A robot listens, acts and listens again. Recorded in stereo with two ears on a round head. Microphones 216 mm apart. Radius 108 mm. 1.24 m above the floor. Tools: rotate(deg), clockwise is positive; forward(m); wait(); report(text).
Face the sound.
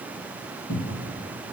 rotate(-70)
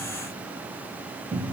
rotate(-10)
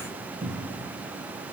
report("Facing the cupboard door, 1 to 2 m away.")